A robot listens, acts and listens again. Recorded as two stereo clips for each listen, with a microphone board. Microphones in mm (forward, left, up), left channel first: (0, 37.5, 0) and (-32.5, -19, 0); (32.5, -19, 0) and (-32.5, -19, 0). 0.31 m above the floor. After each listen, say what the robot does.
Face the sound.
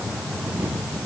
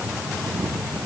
Keep listening.
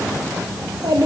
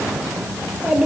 Turn 100° right.
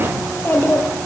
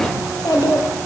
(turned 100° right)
Facing the child speaking.